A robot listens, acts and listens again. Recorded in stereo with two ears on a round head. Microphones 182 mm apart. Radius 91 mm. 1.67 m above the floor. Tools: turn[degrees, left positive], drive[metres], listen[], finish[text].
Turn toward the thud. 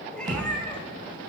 Thought: The thud: about 20° right or 160° right.
Action: turn[-20]
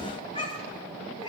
Action: listen[]
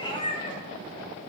Action: finish[I heard a thud, but can't make it out now. It was about straight ahead or 140° right.]